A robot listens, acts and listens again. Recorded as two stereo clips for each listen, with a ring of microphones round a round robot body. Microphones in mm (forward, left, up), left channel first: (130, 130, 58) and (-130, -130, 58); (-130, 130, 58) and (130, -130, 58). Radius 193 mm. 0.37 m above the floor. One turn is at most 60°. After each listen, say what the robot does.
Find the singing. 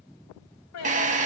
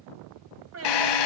Found it: singing, straight ahead, 2 to 4 m away.